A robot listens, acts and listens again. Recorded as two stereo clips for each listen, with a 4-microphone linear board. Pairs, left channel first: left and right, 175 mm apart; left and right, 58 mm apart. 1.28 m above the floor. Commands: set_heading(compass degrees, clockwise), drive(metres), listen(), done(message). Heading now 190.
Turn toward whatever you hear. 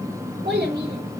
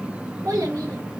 set_heading(255)
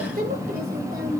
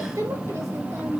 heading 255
set_heading(320)
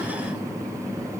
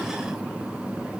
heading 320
listen()
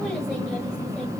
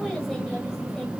listen()
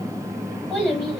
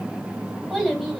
done("Found it: a child speaking, straight ahead.")